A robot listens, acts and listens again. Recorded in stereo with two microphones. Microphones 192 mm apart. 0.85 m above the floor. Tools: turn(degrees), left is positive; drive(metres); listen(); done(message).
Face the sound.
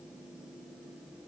listen()
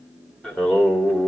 turn(degrees=30)
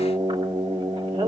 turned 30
turn(degrees=-25)
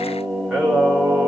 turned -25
done("Found it: singing, straight ahead.")